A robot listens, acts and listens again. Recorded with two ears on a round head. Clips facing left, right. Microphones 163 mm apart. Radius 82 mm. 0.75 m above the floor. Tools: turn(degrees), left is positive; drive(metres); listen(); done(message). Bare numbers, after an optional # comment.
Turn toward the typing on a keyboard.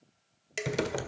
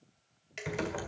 # The typing on a keyboard: about 45° left or 135° left.
turn(45)
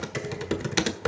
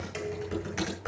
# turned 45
# So it is at 85° left.
turn(85)
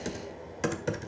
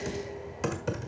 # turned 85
# The typing on a keyboard is now 10° left.
turn(10)
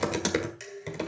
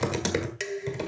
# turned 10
done("Found it: typing on a keyboard, straight ahead.")